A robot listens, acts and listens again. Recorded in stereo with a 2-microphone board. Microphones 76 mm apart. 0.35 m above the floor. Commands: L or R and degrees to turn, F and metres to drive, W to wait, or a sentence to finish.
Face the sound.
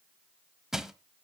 R30
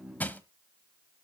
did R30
L25
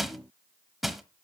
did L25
Found it: crushing, straight ahead, 1 to 2 m away.